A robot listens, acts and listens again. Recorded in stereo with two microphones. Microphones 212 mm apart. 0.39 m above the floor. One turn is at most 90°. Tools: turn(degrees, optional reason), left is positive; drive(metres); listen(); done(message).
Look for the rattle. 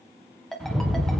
turn(degrees=30)
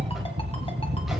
turn(degrees=-30, reason="So it is at 30° right.")
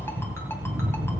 turn(degrees=-10, reason="The rattle is now 10° right.")
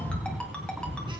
done("Facing the rattle, 1 to 2 m away.")